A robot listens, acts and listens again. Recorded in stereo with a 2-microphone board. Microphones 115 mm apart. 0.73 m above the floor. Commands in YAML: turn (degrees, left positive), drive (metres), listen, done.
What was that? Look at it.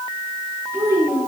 turn: -25
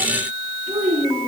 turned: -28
turn: -125
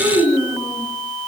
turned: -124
done: "Found it: a child speaking, straight ahead, over 4 m away."